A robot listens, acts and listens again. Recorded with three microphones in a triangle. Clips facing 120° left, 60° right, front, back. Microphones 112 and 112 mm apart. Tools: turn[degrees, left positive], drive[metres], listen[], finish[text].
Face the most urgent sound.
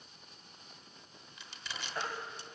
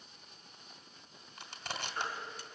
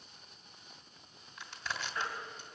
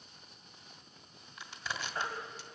Thought: The baby crying: 120° left.
Action: turn[120]
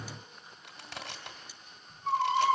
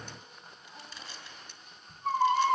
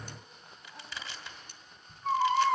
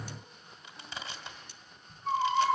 Thought: The baby crying is now 25° right.
Action: turn[-25]
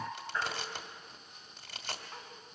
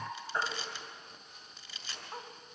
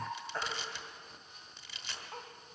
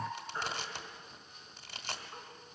Action: finish[Facing the baby crying, 2 to 4 m away.]